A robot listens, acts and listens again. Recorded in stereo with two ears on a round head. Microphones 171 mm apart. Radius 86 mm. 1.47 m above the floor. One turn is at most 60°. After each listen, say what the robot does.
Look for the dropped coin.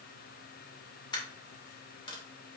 Turn 25° left.
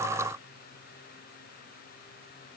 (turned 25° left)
Keep listening.
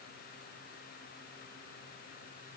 I heard a dropped coin, but can't make it out now. It was about straight ahead or 130° left.